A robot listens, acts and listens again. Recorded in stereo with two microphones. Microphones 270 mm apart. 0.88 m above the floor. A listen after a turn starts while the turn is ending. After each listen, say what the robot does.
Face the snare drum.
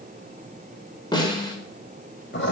Turn 15° left.
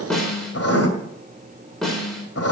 Facing the snare drum.